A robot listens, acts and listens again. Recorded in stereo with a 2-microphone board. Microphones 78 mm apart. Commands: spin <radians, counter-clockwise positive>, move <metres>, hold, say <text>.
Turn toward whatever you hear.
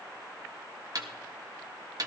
spin -0.87
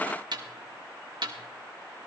spin -1.31
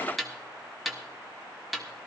say Facing the snare drum, 1 to 2 m away.